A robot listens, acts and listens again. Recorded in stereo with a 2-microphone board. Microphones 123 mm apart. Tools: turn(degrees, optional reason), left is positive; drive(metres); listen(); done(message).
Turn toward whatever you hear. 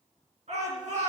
turn(degrees=-65, reason="The shout: about 65° right or 115° right.")
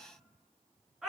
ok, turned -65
done("Found it: a shout, straight ahead, over 4 m away.")